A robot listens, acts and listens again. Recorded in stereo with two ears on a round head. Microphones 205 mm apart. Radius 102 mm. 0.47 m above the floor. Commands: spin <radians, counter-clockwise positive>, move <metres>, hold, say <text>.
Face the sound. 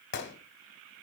spin 0.87
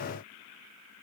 hold
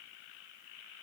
say I heard a gunshot, but can't make it out now. It was about straight ahead or 80° left.